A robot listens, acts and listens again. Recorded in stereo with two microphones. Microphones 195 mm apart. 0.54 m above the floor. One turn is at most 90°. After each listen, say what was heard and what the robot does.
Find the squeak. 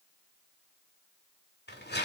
Keep listening.
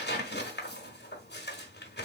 Keep listening.
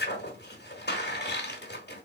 I can't make out a squeak to turn to.